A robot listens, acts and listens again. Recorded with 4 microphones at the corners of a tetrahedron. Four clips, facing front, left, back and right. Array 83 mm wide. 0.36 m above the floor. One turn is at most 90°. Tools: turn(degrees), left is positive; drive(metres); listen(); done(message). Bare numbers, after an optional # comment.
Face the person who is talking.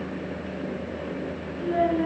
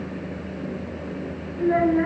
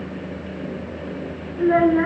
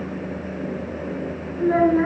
# The child speaking: 165° right.
turn(-90)
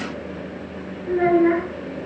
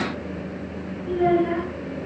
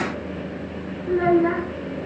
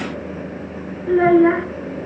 # The child speaking is now 90° right.
turn(-90)
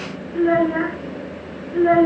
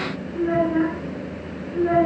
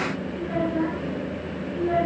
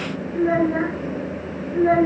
# The child speaking is now 20° right.
turn(-20)
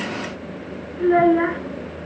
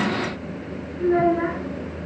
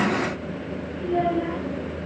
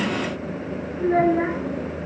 done("Found it: a child speaking, straight ahead.")